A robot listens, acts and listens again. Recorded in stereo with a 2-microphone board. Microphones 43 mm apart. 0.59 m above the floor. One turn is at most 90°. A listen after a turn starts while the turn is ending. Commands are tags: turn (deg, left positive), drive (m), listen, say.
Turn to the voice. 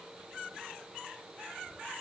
<listen/>
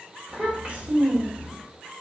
<turn deg="-25"/>
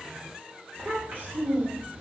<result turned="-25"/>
<turn deg="-90"/>
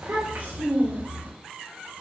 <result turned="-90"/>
<turn deg="-50"/>
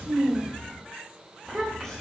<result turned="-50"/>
<say>Found it: a child speaking, straight ahead.</say>